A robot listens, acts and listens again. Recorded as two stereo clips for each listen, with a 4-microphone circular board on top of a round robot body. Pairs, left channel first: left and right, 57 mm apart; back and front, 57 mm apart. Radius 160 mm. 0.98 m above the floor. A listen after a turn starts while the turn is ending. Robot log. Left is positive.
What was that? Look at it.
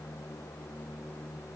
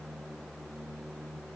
cmd idle
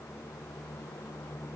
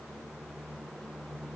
cmd idle
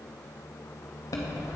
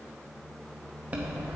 note: The chime: 70° left.
cmd yaw +70
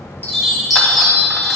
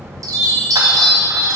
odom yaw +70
end: Facing the chime.